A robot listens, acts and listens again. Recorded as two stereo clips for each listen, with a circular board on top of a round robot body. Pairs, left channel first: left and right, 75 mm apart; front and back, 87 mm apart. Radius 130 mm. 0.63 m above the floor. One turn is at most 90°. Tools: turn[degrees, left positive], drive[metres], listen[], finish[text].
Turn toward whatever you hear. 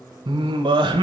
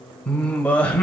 Thought: The singing: 80° right.
Action: turn[-80]
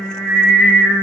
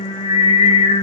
Action: finish[Found it: singing, straight ahead.]